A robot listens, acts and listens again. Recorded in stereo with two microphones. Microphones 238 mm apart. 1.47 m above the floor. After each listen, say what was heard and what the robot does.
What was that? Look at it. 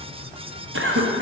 The cough: about 55° right or 125° right. Turn 55° right.
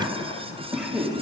Facing the cough.